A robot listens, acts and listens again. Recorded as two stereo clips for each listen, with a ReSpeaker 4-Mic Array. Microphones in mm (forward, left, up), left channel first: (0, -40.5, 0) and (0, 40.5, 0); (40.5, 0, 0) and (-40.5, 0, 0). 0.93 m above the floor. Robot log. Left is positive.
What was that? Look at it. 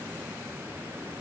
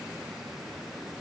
cmd idle
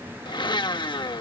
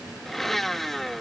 note: The blender: 90° right.
cmd yaw -90
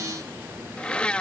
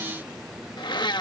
note: The blender is now 15° right.
cmd yaw -15
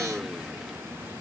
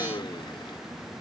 cmd idle
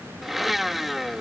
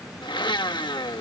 end: Found it: a blender, straight ahead.